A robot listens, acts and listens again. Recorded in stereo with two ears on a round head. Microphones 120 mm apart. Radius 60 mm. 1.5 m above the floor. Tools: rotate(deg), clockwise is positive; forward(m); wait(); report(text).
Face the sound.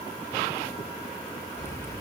rotate(-25)
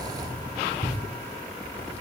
rotate(-125)
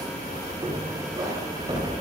rotate(30)
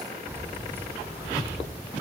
rotate(20)
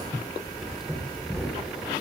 report("Found it: keys jangling, straight ahead.")